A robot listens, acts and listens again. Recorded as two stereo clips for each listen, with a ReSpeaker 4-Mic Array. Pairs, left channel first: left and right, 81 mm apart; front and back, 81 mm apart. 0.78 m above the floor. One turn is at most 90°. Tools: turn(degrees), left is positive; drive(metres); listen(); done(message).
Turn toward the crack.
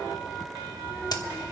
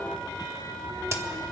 turn(degrees=90)
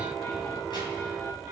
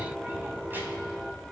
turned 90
turn(degrees=35)
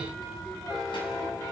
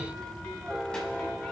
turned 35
done("I heard a crack from this way, but can't make it out now.")